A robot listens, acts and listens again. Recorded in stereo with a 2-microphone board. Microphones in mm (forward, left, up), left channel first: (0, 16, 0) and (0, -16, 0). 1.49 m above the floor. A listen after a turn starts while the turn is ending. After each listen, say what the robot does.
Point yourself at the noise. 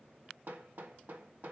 Turn 60° right.
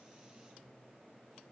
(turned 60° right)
Keep listening.
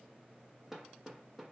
Turn 10° right.
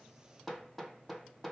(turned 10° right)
Found it: hammering, straight ahead.